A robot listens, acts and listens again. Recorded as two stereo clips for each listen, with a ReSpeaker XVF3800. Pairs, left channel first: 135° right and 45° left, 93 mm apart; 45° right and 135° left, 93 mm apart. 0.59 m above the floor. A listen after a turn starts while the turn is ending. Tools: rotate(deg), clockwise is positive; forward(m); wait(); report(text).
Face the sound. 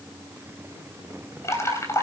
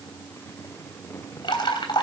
rotate(75)
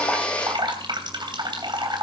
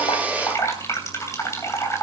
rotate(-15)
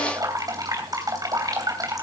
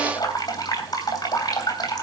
report("Found it: dripping, straight ahead, 2 to 4 m away.")